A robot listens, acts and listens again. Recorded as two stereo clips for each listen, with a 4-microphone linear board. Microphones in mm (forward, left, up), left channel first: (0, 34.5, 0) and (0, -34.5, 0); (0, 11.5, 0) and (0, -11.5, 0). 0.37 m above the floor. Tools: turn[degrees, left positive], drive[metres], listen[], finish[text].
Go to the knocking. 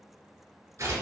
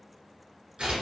Action: listen[]
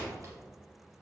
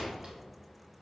Action: listen[]
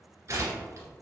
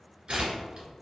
Action: finish[I can't make out knocking to turn to.]